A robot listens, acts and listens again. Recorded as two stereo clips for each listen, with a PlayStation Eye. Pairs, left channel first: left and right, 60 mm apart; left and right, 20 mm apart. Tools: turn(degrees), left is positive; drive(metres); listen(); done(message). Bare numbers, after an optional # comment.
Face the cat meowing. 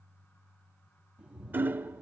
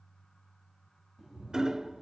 # The cat meowing: about 20° right or 160° right.
turn(-20)
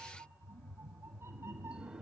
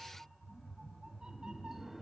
# So it is at 135° right.
turn(-135)
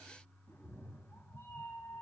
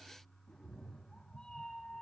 # The cat meowing is now 45° left.
turn(45)
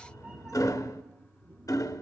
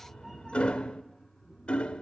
# The cat meowing is now 15° right.
turn(-15)
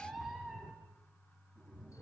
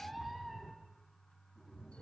done("Found it: a cat meowing, straight ahead.")